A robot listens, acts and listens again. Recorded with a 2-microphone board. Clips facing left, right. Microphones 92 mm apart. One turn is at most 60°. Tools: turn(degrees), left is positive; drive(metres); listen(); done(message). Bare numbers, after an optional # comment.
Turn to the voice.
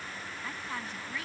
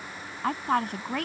# The woman speaking: about 60° right or 120° right.
turn(-60)
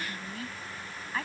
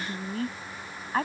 # So it is at 40° right.
turn(-40)
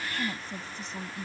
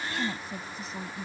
done("Found it: a woman speaking, straight ahead.")